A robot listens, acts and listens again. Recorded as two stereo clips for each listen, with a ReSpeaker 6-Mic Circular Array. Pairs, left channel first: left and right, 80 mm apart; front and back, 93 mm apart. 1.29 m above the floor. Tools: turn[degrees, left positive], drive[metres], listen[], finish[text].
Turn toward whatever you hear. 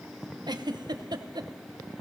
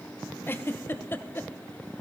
Thought: The giggle: 65° right.
Action: turn[-65]
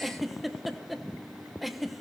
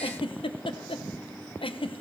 Action: finish[Facing the giggle, under 1 m away.]